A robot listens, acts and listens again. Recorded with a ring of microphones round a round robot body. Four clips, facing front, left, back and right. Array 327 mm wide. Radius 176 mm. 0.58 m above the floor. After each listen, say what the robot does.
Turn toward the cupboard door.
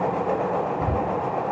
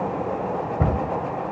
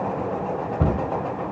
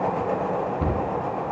Turn 135° left.
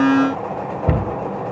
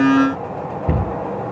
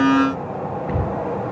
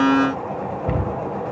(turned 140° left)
Facing the cupboard door.